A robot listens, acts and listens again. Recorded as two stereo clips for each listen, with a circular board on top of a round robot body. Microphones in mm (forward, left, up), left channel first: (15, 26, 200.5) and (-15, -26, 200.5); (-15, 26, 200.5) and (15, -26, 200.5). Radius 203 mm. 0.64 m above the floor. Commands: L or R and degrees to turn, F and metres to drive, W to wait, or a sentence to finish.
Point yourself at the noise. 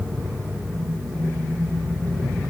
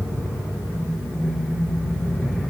W
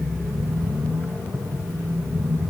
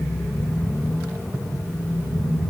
W
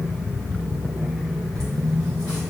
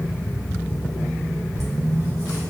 L130
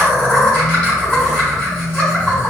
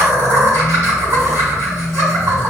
R20
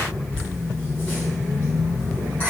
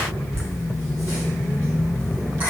R10
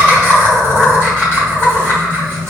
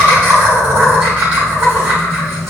Found it: laughter, straight ahead, over 4 m away.